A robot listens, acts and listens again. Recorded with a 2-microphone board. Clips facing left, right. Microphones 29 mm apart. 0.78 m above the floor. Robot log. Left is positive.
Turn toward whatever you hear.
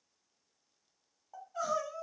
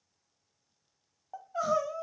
note: The crying: about 30° right or 150° right.
cmd yaw -30
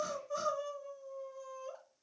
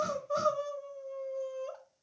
note: So it is at 115° right.
cmd yaw -115
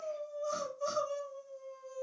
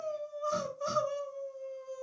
note: The crying is now 15° right.
cmd yaw -15
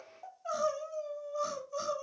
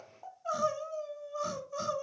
end: Found it: crying, straight ahead, 1 to 2 m away.